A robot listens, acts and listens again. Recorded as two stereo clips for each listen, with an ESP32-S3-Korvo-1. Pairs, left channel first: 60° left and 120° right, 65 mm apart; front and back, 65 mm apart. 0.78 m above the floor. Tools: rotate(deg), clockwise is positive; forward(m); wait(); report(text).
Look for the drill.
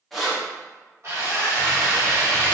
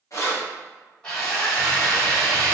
rotate(80)
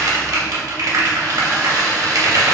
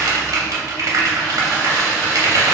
report("Found it: a drill, straight ahead.")